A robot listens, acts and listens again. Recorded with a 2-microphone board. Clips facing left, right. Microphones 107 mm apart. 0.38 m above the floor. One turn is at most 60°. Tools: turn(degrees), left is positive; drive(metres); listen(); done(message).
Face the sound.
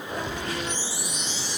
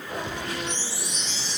turn(degrees=30)
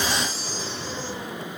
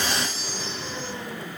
turn(degrees=60)
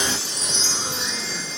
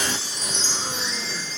turn(degrees=60)
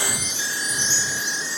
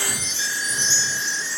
turn(degrees=15)
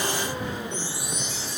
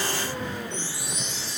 done("Found it: a chime, straight ahead.")